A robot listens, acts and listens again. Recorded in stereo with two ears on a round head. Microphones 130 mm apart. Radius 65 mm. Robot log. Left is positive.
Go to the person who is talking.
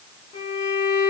cmd idle
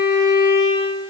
cmd idle
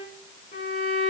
end: I can't make out anyone speaking, only a violin.